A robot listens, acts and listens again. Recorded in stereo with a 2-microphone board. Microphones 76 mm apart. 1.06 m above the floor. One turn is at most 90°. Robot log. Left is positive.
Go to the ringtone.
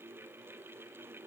cmd idle
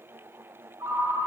note: The ringtone: about 40° right or 140° right.
cmd yaw -40
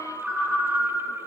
cmd fwd 1.0
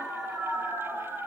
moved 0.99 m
cmd fwd 1.0
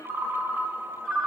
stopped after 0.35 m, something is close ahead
end: I am next to the ringtone.